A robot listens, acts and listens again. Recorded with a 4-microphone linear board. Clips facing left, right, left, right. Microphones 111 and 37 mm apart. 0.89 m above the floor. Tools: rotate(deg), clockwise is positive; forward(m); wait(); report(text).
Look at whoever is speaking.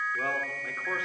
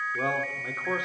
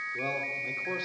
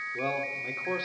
rotate(20)
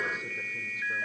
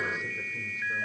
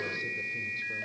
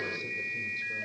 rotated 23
wait()
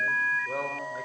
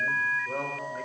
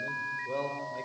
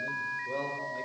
report("Facing the man speaking.")